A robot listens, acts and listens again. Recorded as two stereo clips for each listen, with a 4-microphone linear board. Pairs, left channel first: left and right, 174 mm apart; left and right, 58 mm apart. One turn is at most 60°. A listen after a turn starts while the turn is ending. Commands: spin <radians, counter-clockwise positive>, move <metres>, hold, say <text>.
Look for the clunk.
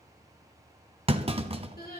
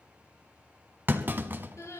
spin -0.61
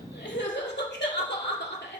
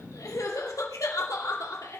hold
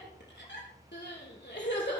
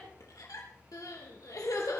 say I heard a clunk, but can't make it out now. It was about straight ahead or 110° right.